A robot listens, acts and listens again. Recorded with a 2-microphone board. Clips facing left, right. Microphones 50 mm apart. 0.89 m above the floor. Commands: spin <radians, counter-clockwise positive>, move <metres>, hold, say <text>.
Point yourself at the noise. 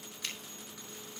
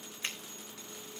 spin -0.52
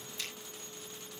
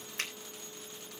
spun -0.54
spin -2.09
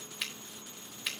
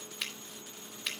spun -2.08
say Facing the finger snap, 2 to 4 m away.